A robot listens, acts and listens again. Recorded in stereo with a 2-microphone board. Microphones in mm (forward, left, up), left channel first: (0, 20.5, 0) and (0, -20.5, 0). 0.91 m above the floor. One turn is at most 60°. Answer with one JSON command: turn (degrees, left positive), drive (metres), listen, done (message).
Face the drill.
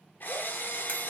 {"turn": 50}
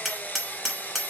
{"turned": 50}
{"turn": 60}
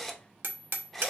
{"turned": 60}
{"turn": 10}
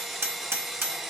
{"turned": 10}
{"done": "Found it: a drill, straight ahead, under 1 m away."}